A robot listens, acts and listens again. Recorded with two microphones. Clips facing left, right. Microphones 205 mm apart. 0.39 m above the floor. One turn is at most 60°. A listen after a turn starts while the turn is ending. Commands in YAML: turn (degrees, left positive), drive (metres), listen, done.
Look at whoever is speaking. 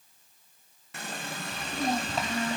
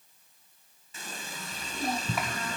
turn: 25
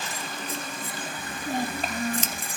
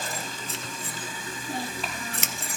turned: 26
turn: 60
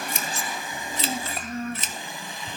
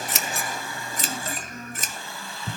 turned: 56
turn: 60
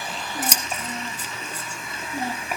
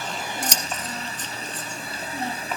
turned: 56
turn: 10
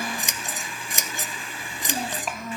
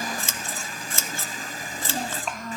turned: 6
done: "Found it: a child speaking, straight ahead."